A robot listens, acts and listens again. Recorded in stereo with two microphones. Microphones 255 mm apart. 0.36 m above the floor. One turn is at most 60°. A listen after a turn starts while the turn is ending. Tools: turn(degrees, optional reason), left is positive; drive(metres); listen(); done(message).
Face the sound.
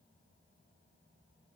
listen()
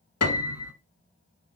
turn(degrees=60, reason="The piano: about 70° left or 110° left.")
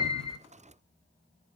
listen()
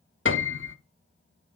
turn(degrees=50, reason="So it is at 50° left.")
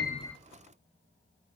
listen()
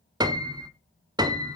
turn(degrees=-15, reason="The piano is now 15° right.")
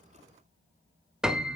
done("Facing the piano, under 1 m away.")